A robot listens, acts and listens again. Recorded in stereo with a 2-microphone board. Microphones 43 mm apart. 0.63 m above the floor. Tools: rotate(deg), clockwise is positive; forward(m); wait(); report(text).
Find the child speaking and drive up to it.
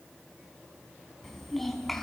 rotate(-30)
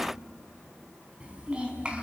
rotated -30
rotate(25)
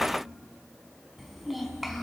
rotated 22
forward(1.0)
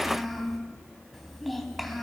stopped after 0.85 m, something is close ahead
report("Blocked. The child speaking is further on, straight ahead.")